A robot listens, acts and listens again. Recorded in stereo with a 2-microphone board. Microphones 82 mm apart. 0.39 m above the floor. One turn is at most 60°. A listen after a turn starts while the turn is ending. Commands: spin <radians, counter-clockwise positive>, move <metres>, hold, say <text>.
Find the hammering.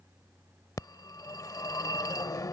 hold
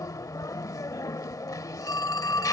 hold
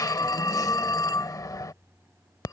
say I can't make out hammering to turn to.